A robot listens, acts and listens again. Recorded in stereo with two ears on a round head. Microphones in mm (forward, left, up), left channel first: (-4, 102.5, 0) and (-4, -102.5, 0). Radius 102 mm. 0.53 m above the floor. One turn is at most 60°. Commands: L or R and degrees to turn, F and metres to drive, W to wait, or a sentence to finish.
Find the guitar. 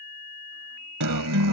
R60
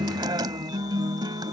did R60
R20
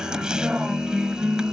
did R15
Facing the guitar.